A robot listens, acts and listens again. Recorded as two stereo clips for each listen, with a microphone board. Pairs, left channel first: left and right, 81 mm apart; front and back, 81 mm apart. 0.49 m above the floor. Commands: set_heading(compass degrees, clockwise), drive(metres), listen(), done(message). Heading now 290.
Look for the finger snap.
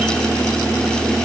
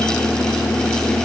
listen()
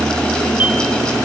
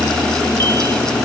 listen()
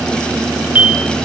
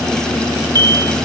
done("I can't make out a finger snap to turn to.")